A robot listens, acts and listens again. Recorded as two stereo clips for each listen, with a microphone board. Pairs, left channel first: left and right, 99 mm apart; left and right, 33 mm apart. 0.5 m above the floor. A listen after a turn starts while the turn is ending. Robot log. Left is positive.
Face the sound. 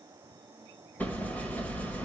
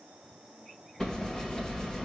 note: The hammering: about 15° left or 165° left.
cmd yaw +15
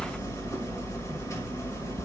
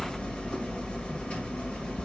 note: So it is at 150° left.
cmd yaw +150
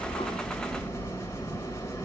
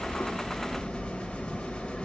note: The hammering is now 30° left.
cmd yaw +30
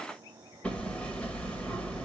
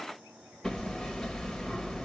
note: The hammering is now 15° left.
cmd yaw +15
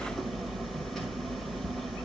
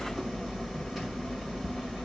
end: Facing the hammering, 1 to 2 m away.